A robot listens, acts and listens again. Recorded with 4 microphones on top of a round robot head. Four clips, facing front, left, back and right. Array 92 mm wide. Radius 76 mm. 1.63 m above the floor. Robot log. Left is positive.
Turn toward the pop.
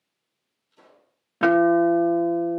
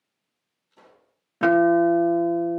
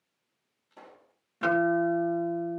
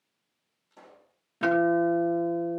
note: The pop: 155° right.
cmd yaw -155
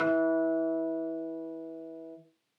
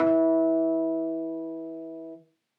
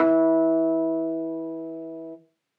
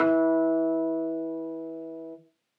end: Facing where the pop came from. I can't hear it now.